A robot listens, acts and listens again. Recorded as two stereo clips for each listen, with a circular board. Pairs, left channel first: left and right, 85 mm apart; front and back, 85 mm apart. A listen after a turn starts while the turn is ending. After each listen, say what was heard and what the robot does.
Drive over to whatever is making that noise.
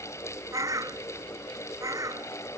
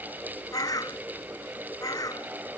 The bird: 45° right. Turn 45° right.
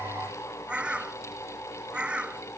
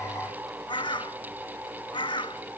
The bird is now 15° right. Turn 15° right.
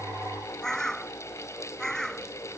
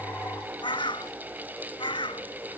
Drive 1.0 m forward.
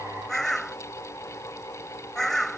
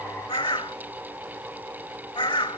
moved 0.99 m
Drive 1.0 m forward.
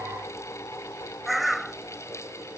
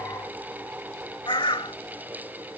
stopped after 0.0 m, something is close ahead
Arrived at the bird, straight ahead.